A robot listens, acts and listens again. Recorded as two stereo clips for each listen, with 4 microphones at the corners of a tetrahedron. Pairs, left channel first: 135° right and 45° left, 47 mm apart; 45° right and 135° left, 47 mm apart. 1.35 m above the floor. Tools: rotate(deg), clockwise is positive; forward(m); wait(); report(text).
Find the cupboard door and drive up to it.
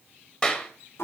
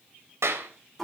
wait()
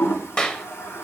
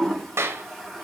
wait()
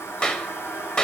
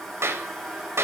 report("I can't make out a cupboard door to turn to.")